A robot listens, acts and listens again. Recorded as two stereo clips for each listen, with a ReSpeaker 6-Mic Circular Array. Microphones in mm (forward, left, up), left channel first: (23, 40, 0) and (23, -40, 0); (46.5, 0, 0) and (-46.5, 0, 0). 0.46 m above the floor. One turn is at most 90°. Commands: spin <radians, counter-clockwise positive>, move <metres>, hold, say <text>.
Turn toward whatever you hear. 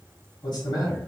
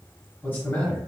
spin 1.22
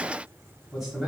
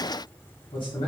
say Facing the man speaking.